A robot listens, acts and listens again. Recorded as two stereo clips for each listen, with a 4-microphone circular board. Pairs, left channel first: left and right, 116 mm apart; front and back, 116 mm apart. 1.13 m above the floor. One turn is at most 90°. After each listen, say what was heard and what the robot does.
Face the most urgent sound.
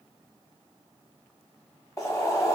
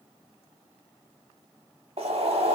Keep listening.
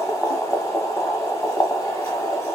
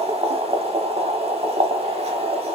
Keep listening.
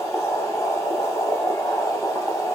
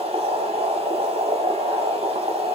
I can't make out anything urgent to turn to.